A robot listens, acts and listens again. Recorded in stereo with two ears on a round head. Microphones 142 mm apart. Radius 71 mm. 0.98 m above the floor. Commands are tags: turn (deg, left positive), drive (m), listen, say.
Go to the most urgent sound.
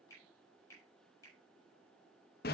<listen/>
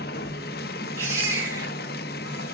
<turn deg="-15"/>
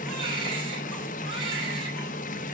<listen/>
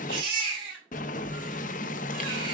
<turn deg="-145"/>
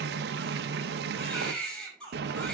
<drive m="1.0"/>
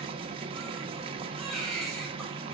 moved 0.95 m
<drive m="1.0"/>
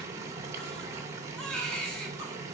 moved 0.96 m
<drive m="1.0"/>
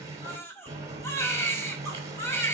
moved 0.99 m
<turn deg="15"/>
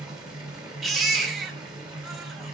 <drive m="1.0"/>
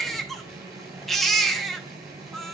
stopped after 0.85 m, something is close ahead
<say>Arrived at the baby crying, straight ahead.</say>